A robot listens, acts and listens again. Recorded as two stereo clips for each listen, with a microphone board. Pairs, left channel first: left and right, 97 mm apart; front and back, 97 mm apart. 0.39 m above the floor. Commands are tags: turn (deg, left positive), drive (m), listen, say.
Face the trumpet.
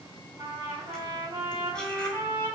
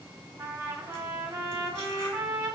<turn deg="-130"/>
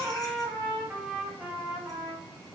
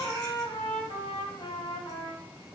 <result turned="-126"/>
<say>Facing the trumpet.</say>